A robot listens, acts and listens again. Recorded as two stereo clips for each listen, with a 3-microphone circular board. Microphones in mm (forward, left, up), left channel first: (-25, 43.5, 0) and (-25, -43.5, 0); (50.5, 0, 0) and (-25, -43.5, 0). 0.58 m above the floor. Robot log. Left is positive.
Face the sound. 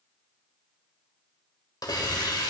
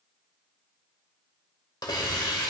note: The hiss: 60° left.
cmd yaw +60
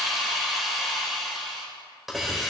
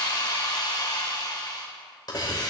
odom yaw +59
end: Facing the hiss.